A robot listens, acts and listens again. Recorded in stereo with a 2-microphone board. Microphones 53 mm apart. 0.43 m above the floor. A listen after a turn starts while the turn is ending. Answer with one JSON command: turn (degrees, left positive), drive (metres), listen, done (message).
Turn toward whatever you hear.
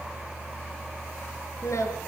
{"turn": 70}
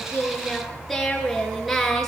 {"done": "Found it: singing, straight ahead, over 4 m away."}